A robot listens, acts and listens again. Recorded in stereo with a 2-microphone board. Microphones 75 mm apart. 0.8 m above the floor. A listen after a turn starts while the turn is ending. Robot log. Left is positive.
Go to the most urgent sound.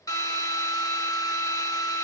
cmd idle
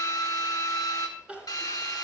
cmd yaw -30
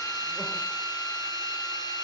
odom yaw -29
cmd idle
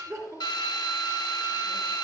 note: So it is at 135° right.
cmd yaw -135
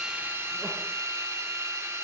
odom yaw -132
cmd idle
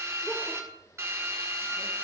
cmd idle
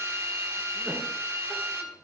end: Facing where the crying came from. I can't hear it now. I did not reach it.